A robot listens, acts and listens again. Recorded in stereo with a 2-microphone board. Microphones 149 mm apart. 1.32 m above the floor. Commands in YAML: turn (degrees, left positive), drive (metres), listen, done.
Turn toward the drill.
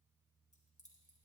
listen: true
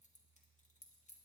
listen: true
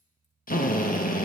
turn: 70
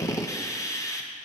turn: 20
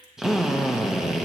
done: "Found it: a drill, straight ahead, 1 to 2 m away."